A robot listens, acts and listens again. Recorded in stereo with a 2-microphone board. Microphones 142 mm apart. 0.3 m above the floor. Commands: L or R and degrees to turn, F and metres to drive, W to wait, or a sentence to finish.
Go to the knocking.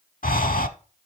W
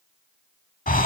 W
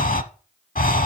I can't make out knocking, only breathing.